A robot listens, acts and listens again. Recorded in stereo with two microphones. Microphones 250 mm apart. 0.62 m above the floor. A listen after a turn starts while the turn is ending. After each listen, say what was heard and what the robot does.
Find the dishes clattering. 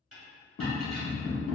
The dishes clattering: about 60° right or 120° right. Turn 60° right.
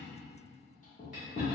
Keep listening.
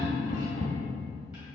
Keep listening.
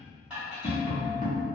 Facing the dishes clattering.